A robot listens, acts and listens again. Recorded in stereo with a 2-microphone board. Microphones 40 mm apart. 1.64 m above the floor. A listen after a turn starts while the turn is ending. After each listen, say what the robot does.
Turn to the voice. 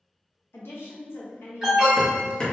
Turn 75° left.
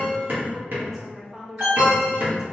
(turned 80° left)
Found it: a woman speaking, straight ahead, 1 to 2 m away.